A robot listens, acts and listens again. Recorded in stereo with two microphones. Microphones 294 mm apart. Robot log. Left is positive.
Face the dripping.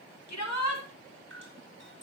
note: The dripping: about 45° right or 135° right.
cmd yaw -45
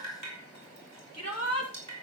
note: So it is at 90° right.
cmd yaw -90
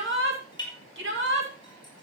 note: The dripping is now 15° left.
cmd yaw +15
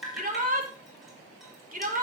end: Facing the dripping, over 4 m away.